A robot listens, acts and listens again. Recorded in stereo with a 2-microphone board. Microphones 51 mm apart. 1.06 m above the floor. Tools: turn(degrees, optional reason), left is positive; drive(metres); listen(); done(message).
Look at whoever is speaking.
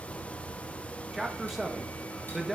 turn(degrees=-30)
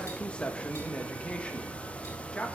turn(degrees=25, reason="So it is at 25° left.")
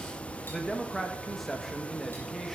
done("Facing the man speaking.")